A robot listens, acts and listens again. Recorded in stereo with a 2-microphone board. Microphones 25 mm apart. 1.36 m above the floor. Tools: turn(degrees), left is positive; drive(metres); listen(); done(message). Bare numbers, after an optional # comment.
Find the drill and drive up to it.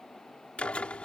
# The drill: about 55° left or 125° left.
turn(55)
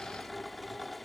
drive(1.0)
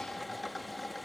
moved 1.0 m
drive(1.0)
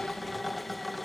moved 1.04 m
drive(1.0)
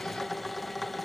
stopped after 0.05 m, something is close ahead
done("I am next to the drill.")